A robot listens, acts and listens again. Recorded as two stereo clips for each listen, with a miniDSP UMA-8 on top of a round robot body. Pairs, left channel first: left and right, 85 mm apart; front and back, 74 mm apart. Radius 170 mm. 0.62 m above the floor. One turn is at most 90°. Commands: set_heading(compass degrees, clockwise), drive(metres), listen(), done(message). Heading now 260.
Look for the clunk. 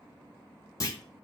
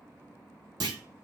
set_heading(170)
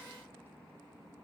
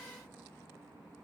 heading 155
set_heading(120)
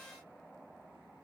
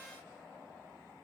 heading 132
set_heading(117)
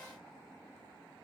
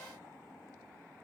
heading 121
done("I heard a clunk from this way, but can't make it out now.")